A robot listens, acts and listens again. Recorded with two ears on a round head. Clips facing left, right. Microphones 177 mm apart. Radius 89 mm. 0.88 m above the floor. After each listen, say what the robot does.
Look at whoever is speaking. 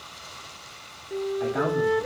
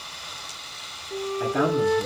Turn 40° right.
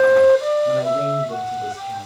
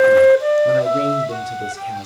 Turn 95° right.
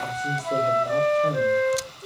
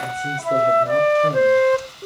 Keep listening.
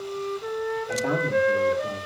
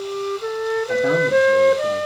Keep listening.
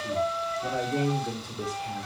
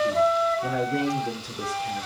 Turn 15° right.
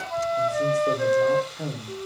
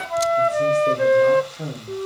Facing the man speaking.